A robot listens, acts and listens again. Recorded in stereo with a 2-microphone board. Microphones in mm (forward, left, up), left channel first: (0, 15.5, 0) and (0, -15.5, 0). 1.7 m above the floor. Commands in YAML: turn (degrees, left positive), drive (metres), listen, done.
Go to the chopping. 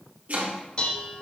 turn: -50
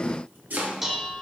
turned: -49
turn: -85
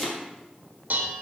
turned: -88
drive: 1.0
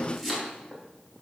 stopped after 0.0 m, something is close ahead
done: "Blocked. The chopping is further on, straight ahead."